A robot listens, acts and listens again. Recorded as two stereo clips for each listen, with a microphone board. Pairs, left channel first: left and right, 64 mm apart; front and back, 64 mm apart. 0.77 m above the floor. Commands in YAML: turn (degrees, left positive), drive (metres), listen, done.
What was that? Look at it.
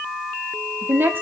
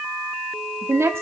turn: -140
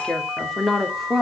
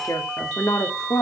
done: "Facing the woman speaking."